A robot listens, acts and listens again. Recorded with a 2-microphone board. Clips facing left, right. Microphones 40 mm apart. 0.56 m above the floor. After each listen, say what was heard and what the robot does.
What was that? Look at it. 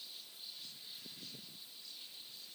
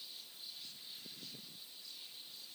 Keep listening.
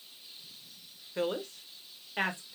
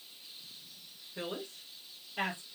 The woman speaking: about 65° left or 115° left. Turn 65° left.
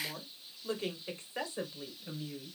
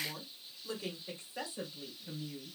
So it is at 50° left. Turn 50° left.
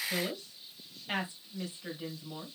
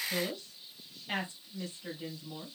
The woman speaking is now 10° left. Turn 10° left.
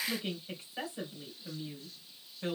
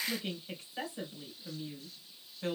Found it: a woman speaking, straight ahead.